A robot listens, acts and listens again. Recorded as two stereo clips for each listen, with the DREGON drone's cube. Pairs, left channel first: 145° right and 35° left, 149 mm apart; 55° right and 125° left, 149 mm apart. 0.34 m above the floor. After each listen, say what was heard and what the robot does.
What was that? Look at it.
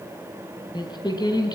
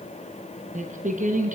The singing: 150° left. Turn 150° left.
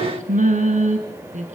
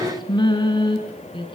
Found it: singing, straight ahead.